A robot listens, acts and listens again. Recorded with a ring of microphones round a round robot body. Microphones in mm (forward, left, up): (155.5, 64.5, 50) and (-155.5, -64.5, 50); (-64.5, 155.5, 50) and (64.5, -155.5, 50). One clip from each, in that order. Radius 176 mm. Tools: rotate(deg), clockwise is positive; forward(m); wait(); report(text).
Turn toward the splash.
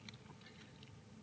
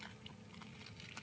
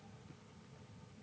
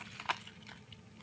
wait()
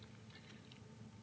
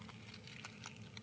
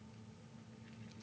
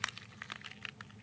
wait()
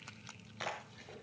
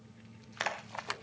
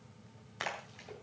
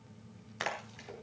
rotate(150)
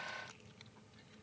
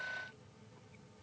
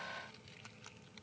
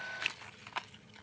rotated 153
report("Facing where the splash came from. I can't hear it now.")